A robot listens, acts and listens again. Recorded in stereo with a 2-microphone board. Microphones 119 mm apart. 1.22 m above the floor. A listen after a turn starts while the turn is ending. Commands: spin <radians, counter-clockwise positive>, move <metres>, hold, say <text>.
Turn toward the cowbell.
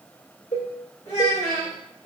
spin 1.22
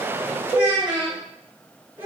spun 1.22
spin 0.52
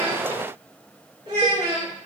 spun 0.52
hold
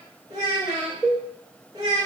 spin 0.17
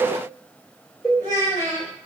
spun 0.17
say Facing the cowbell.